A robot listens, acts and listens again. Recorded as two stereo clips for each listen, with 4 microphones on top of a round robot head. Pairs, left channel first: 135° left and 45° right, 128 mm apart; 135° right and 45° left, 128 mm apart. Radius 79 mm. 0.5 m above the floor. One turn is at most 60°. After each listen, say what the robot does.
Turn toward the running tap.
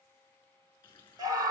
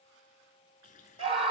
Turn 60° right.
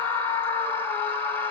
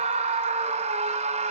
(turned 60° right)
Turn 60° right.
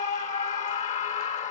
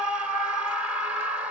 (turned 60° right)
Turn 50° right.
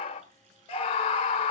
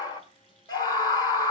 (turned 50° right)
Turn 10° right.
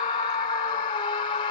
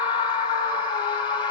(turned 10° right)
Keep listening.
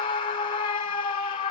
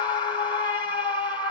Keep listening.
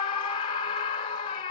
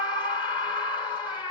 Facing where the running tap came from. I can't hear it now.